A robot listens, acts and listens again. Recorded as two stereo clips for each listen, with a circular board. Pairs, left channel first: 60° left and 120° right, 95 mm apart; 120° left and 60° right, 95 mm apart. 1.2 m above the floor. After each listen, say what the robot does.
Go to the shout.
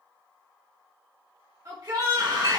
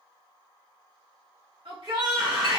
Turn 70° right.
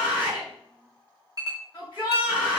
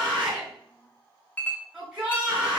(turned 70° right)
Turn 20° left.
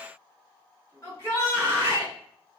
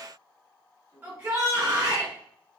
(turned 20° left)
Drive 1.0 m forward.
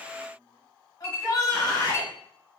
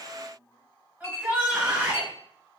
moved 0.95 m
Turn 10° left.
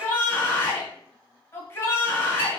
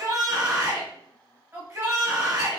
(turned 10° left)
Drive 1.0 m forward.
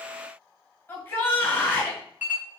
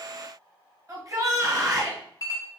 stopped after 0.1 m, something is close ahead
I am next to the shout.